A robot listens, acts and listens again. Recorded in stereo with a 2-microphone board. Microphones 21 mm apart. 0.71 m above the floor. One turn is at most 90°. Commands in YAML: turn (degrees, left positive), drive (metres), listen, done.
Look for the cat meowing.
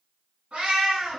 turn: -65
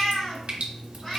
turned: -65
turn: 15
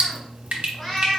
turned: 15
turn: 15
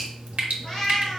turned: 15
turn: 10
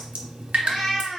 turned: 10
done: "Facing the cat meowing."